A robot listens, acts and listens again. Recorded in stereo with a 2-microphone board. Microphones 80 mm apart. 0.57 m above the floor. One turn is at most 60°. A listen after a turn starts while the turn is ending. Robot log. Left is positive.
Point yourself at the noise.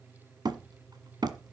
note: The hammering: about 60° right or 120° right.
cmd yaw -60
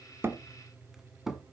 end: Facing the hammering, 1 to 2 m away.